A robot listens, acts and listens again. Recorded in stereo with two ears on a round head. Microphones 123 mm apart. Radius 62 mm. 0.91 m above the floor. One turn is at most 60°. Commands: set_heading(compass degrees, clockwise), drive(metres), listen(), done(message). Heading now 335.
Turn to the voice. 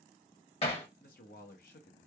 set_heading(275)
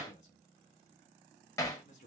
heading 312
set_heading(257)
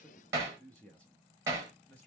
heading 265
set_heading(255)
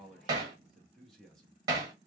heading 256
done("Facing the man speaking, under 1 m away.")